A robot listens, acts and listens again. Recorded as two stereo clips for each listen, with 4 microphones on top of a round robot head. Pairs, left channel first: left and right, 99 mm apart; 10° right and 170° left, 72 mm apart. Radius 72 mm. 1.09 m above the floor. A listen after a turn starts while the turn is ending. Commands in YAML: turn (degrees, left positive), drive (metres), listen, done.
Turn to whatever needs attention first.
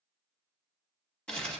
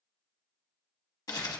listen: true
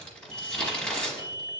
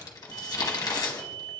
turn: -160
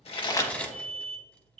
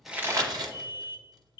done: "Facing the alarm, under 1 m away."